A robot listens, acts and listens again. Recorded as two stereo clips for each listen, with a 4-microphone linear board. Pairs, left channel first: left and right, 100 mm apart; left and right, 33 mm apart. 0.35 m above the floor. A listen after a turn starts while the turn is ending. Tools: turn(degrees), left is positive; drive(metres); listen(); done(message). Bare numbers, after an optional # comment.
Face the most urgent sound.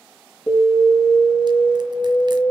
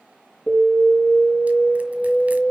turn(30)
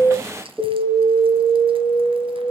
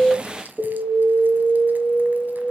# So it is at 20° right.
turn(-20)
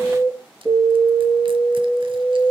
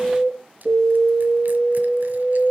done("Found it: an alarm, straight ahead, over 4 m away.")